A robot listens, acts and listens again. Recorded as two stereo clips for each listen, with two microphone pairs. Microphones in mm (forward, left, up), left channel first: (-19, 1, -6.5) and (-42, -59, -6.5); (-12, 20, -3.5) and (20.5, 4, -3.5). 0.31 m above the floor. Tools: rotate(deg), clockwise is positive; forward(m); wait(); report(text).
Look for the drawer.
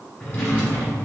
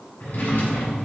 rotate(-125)
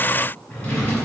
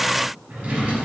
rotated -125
report("Facing the drawer.")